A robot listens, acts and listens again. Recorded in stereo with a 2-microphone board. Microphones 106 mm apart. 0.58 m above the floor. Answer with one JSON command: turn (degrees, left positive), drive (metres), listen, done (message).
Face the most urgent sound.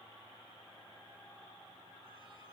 {"listen": true}
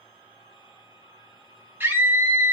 {"turn": -20}
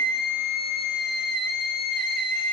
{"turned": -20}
{"done": "Facing the scream."}